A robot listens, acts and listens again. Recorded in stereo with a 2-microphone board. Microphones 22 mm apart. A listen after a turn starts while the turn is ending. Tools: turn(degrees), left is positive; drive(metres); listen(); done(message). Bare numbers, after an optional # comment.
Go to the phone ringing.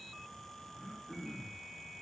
listen()
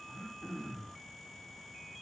listen()
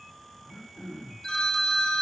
# The phone ringing: about 40° left or 140° left.
turn(40)
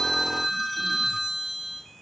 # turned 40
drive(1.0)
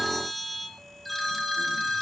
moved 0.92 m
drive(1.0)
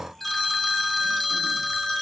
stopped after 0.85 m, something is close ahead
done("Arrived at the phone ringing, straight ahead.")